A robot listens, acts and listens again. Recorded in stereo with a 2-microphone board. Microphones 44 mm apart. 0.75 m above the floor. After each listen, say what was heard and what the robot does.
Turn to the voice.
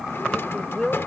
Turn 30° left.
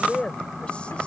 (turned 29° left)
So it is at 150° left. Turn 150° left.
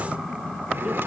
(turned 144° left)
Keep listening.
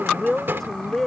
Found it: a woman speaking, straight ahead.